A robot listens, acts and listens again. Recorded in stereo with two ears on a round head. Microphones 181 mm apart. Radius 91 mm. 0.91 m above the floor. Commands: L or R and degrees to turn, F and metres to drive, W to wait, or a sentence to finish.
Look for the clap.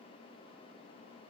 W
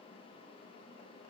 W
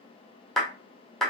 L30
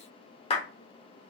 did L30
L150
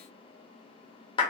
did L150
L25
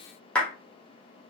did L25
Found it: a clap, straight ahead.